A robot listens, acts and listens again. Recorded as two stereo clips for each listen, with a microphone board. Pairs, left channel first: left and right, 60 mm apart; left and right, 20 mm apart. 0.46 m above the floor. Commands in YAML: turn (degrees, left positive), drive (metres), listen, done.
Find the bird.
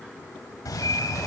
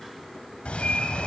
turn: 70
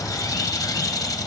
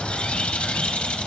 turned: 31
turn: 70
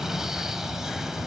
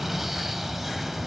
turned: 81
turn: -10
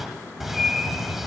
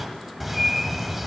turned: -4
done: "Found it: a bird, straight ahead."